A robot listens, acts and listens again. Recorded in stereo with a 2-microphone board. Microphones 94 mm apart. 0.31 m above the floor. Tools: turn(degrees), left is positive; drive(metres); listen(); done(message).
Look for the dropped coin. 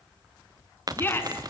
turn(degrees=-40)
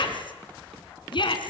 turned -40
listen()
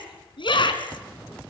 done("I heard a dropped coin, but can't make it out now. It was about straight ahead or 100° right.")